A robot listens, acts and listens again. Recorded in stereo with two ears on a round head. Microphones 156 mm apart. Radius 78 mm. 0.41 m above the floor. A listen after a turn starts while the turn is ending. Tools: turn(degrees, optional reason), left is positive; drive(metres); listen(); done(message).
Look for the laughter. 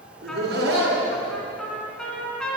turn(degrees=-65, reason="The laughter: about 65° right or 115° right.")
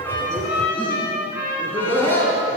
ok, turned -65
turn(degrees=15, reason="So it is at 15° left.")
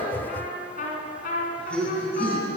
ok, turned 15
turn(degrees=10, reason="The laughter is now 10° left.")
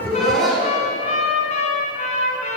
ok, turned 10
done("Found it: laughter, straight ahead.")